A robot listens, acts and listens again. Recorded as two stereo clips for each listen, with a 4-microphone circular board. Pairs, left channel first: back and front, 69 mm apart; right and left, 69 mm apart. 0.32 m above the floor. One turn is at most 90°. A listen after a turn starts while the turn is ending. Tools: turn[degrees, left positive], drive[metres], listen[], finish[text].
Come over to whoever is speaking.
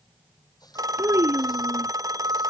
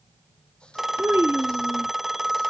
Thought: The child speaking: 40° left.
Action: turn[40]
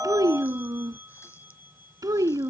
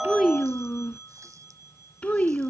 Thought: The child speaking is now 20° right.
Action: turn[-20]
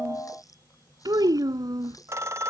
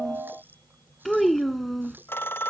Action: drive[1.0]
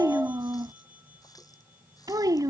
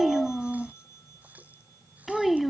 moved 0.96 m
Action: drive[1.0]
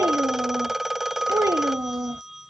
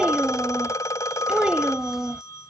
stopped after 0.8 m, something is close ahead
Thought: The child speaking is now 15° left.
Action: turn[15]
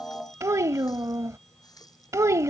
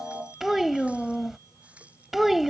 Action: finish[I am next to the child speaking.]